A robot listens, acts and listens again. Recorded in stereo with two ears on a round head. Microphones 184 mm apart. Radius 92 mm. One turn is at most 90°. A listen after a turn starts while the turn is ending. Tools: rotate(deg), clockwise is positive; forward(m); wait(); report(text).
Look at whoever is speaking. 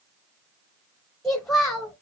rotate(-30)
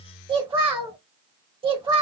rotate(25)
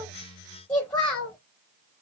rotate(-10)
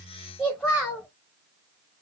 report("Facing the child speaking, under 1 m away.")